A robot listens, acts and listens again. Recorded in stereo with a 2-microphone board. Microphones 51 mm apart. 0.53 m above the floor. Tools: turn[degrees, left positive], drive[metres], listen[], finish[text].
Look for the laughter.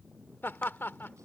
Thought: The laughter: about 50° left or 130° left.
Action: turn[50]
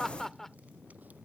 Thought: So it is at 10° left.
Action: turn[10]
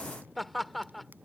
Action: finish[Facing the laughter.]